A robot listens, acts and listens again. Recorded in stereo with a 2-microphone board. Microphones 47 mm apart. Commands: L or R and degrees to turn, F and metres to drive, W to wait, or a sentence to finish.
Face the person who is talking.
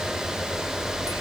W
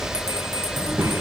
R55
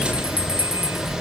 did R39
W
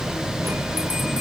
W
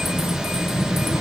R80
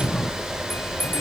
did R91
L10
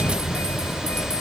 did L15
W
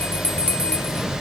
Facing where the child speaking came from. I can't hear it now.